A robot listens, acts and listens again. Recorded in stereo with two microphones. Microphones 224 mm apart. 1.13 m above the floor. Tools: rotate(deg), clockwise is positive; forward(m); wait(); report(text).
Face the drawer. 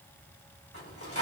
rotate(-90)
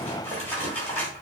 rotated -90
rotate(-10)
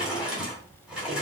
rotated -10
report("Facing the drawer, 2 to 4 m away.")